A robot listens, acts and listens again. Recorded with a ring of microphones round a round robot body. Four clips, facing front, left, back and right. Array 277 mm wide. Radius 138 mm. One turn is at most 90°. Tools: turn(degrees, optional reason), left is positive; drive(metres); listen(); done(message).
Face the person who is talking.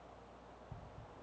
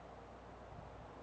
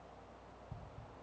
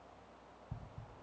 listen()
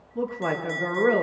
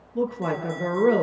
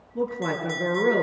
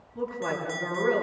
turn(degrees=90, reason="The woman speaking: 120° left.")
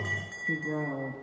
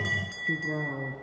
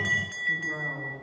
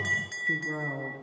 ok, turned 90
turn(degrees=30, reason="Nothing new. It was at 30° left.")
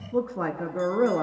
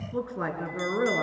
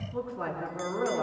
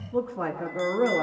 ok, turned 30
turn(degrees=15, reason="The woman speaking is now 15° left.")
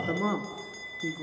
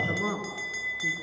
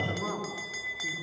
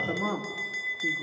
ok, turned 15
listen()
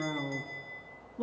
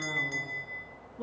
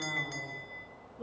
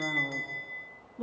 done("Found it: a woman speaking, straight ahead.")